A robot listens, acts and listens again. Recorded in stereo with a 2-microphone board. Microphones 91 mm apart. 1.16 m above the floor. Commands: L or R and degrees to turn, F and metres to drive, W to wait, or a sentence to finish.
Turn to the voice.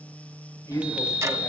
L45
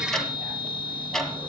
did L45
W
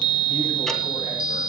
W
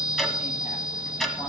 I heard a woman speaking, but can't make it out now. It was about straight ahead or 90° left.